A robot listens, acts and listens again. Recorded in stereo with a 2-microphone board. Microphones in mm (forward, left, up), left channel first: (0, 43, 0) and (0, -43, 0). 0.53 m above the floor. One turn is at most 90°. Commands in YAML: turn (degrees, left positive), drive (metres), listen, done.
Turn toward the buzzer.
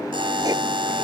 turn: -90
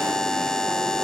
turn: 10
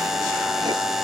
done: "Found it: a buzzer, straight ahead."